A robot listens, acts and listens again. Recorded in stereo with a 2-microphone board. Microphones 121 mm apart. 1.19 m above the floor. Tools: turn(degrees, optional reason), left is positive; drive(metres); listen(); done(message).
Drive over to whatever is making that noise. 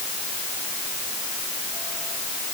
listen()
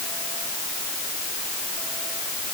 listen()
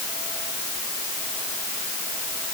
done("I can't make out anything.")